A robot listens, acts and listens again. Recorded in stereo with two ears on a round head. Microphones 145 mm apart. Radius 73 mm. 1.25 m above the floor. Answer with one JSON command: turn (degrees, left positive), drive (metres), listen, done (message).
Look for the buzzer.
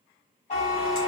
{"turn": 45}
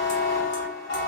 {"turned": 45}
{"turn": 90}
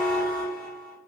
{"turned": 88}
{"done": "Facing the buzzer."}